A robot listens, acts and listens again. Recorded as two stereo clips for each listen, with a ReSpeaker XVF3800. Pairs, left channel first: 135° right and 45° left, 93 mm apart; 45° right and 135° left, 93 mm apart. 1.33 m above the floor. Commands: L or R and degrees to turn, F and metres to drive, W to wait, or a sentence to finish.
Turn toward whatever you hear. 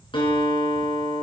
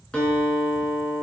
R125
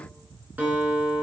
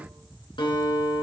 R25
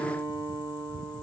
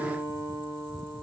R10
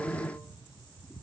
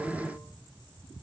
W
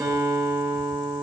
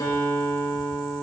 Facing the guitar.